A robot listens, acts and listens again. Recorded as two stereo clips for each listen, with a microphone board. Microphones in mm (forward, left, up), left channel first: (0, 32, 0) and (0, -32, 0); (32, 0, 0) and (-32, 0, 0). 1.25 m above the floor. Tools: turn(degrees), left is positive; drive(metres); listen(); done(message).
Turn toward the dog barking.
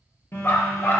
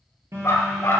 turn(degrees=40)
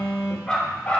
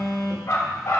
turn(degrees=25)
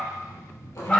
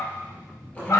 turn(degrees=25)
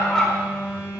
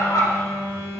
turn(degrees=10)
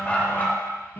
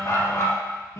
turn(degrees=30)
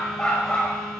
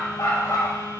turn(degrees=20)
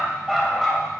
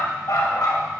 done("Facing the dog barking.")